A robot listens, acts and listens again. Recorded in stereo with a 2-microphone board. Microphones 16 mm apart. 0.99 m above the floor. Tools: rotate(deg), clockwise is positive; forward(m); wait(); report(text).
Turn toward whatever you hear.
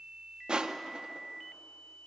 rotate(65)
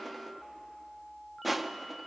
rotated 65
report("Facing the crushing.")